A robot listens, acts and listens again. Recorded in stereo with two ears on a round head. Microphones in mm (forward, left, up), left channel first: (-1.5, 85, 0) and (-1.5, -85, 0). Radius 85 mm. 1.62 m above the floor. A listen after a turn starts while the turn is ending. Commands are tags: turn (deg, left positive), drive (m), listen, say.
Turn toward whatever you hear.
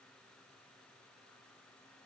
<listen/>
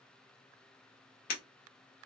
<turn deg="45"/>
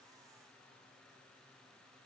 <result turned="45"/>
<listen/>
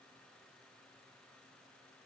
<say>I heard breaking glass, but can't make it out now. It was about straight ahead or 90° left.</say>